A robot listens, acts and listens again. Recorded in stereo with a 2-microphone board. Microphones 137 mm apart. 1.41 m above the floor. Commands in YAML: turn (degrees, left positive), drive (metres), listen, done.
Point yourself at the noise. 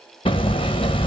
turn: 40
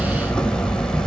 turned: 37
done: "Found it: hammering, straight ahead, under 1 m away."